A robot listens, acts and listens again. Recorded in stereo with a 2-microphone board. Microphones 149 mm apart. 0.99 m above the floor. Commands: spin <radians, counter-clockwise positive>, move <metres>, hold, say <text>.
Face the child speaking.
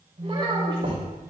spin -0.61
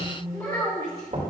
spin 0.35
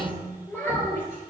spin 0.26
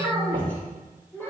spin 0.26
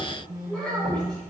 say Found it: a child speaking, straight ahead.